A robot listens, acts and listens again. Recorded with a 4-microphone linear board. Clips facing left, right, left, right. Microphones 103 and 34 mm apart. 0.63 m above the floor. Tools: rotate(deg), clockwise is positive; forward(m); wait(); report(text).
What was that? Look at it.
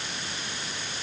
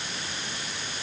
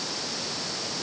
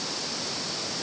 wait()
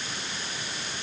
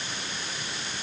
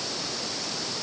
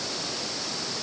wait()
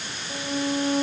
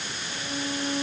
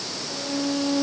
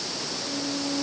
rotate(-35)
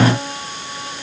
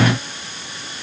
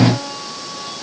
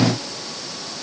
rotate(-110)
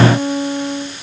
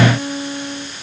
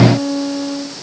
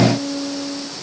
rotate(-35)
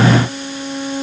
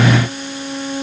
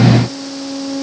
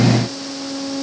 report("Facing the violin.")